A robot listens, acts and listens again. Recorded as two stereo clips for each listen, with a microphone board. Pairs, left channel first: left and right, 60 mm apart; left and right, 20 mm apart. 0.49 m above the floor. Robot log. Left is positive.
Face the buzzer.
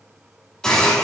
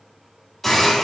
cmd idle
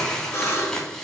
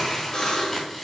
note: The buzzer: about 45° left or 135° left.
cmd yaw +45
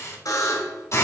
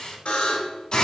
note: So it is at 85° left.
cmd yaw +85
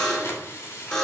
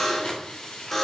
note: The buzzer is now 15° left.
cmd yaw +15
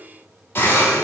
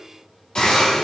cmd idle
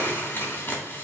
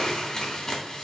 cmd idle
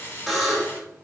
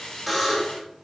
end: Found it: a buzzer, straight ahead.